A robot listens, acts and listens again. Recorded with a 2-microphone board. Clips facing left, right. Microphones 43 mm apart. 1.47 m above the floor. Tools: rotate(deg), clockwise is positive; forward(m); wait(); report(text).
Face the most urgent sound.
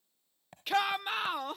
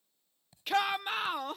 rotate(-30)
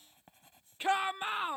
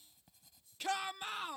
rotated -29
rotate(-150)
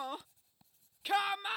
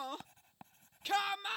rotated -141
rotate(-10)
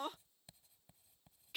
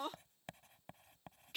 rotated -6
report("Facing the shout.")